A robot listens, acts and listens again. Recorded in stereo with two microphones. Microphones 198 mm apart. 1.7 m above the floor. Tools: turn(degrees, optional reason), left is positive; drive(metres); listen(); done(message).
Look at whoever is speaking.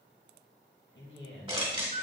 turn(degrees=70, reason="The man speaking: about 70° left or 110° left.")
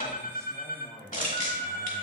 turn(degrees=15, reason="So it is at 15° left.")
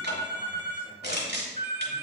listen()
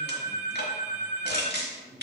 turn(degrees=-15, reason="The man speaking is now 15° right.")
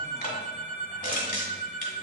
listen()
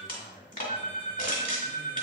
done("Found it: a man speaking, straight ahead, over 4 m away.")